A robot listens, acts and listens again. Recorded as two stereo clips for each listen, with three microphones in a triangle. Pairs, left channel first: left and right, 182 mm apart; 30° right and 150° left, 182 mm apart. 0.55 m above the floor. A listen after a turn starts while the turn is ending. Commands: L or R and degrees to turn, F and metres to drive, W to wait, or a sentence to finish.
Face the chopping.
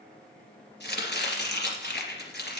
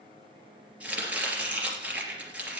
L70
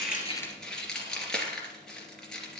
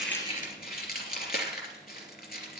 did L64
Found it: chopping, straight ahead.